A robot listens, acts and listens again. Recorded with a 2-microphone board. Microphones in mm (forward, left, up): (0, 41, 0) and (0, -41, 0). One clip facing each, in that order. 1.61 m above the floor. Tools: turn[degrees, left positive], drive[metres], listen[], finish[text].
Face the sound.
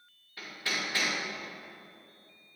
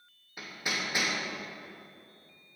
Thought: The hammering: about 15° right or 165° right.
Action: turn[-15]
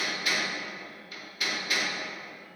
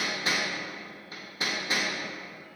Thought: So it is at 150° right.
Action: turn[-150]
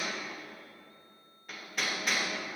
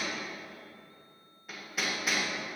Action: finish[Facing the hammering.]